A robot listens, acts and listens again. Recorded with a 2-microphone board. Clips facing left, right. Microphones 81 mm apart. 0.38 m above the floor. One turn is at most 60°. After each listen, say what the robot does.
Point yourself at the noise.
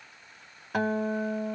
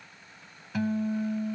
Turn 60° left.
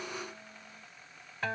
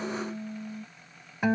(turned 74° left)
Turn 15° right.
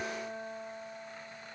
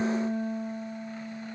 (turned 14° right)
Found it: a guitar, straight ahead.